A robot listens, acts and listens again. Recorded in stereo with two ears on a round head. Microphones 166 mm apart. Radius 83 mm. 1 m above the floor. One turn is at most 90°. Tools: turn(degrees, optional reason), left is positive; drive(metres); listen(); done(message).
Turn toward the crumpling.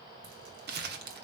turn(degrees=-55, reason="The crumpling: about 55° right or 125° right.")
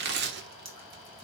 turn(degrees=-65, reason="So it is at 65° right.")
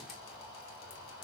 listen()
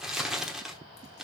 done("Found it: crumpling, straight ahead, 1 to 2 m away.")